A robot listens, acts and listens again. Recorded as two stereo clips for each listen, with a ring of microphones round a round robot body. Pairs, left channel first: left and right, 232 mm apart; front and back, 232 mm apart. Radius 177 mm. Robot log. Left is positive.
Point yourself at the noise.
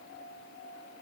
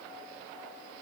cmd idle
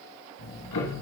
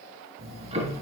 note: The ticking: 115° left.
cmd yaw +115
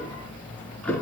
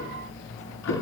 end: Found it: ticking, straight ahead.